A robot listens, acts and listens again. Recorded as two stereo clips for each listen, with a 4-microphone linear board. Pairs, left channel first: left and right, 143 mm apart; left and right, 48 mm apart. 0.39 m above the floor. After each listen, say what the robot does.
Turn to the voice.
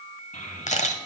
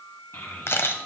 Turn 65° left.
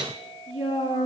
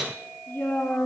Turn 45° left.
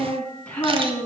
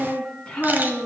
Turn 10° left.
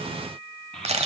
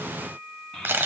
Found it: a child speaking, straight ahead, 2 to 4 m away.